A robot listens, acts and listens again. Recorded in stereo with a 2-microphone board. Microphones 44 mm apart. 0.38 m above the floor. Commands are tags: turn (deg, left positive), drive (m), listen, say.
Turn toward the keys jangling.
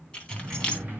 <turn deg="20"/>
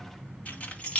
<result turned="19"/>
<turn deg="30"/>
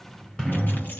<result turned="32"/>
<listen/>
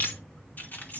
<turn deg="135"/>
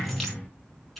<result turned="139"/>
<say>Facing the keys jangling.</say>